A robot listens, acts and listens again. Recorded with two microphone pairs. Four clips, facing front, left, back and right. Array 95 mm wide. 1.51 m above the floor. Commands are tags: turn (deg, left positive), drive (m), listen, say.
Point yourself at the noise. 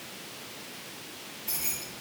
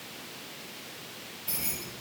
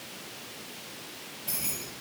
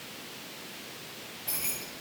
<turn deg="-125"/>
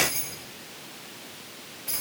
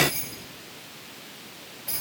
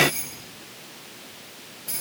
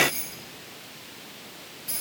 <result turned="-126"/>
<say>Facing the keys jangling, 2 to 4 m away.</say>